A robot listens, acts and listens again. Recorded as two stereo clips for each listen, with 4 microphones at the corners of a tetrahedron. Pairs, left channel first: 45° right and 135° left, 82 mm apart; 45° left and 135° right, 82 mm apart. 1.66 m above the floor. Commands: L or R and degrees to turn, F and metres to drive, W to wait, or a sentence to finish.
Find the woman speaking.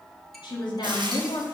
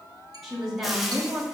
R45
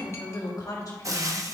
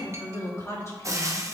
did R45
Found it: a woman speaking, straight ahead, 1 to 2 m away.